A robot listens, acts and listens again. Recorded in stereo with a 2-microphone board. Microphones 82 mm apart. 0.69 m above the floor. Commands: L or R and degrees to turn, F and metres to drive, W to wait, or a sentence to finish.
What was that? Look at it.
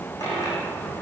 L45
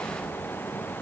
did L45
W
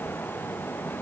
I heard a dropped coin, but can't make it out now. It was about straight ahead or 90° left.